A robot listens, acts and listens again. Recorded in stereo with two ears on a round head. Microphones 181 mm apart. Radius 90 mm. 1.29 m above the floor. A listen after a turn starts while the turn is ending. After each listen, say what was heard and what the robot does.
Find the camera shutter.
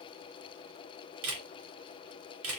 Turn 90° right.
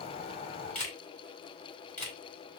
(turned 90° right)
So it is at 10° left. Turn 10° left.
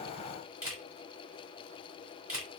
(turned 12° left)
Found it: a camera shutter, straight ahead.